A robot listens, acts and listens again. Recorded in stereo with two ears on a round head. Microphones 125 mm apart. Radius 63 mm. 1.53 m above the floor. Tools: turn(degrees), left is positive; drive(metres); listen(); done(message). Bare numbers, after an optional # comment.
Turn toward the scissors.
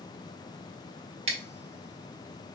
# The scissors: about 45° right or 135° right.
turn(-45)
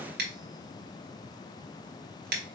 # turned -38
# So it is at 95° right.
turn(-95)
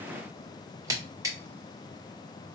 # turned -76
# The scissors is now 20° right.
turn(-20)
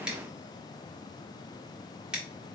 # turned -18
done("Facing the scissors, 1 to 2 m away.")